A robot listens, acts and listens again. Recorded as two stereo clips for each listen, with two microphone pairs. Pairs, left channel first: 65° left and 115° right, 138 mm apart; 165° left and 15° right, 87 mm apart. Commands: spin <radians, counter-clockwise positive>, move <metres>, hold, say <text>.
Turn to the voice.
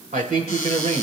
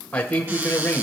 spin -2.18
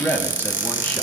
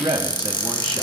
spin -0.17
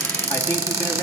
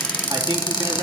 hold
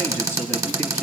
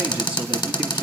spin -0.17
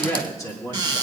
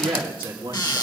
say Found it: a man speaking, straight ahead, 2 to 4 m away.